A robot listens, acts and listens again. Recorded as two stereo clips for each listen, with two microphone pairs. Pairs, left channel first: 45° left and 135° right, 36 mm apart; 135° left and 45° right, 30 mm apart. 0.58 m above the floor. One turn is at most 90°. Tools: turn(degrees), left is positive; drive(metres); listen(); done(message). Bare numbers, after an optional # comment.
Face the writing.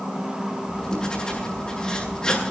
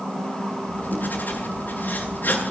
# The writing: 110° left.
turn(90)
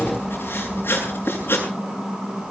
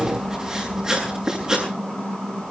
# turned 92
# The writing is now 20° left.
turn(20)
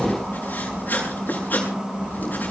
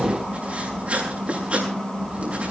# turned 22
done("Facing the writing, over 4 m away.")